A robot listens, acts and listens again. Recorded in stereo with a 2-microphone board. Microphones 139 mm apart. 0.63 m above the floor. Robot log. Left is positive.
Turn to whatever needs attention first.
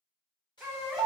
cmd yaw -30
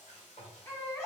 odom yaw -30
note: So it is at 25° left.
cmd yaw +25
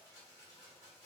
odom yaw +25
cmd idle
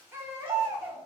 note: The baby crying is now 15° right.
cmd yaw -15
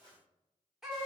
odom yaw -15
end: Found it: a baby crying, straight ahead.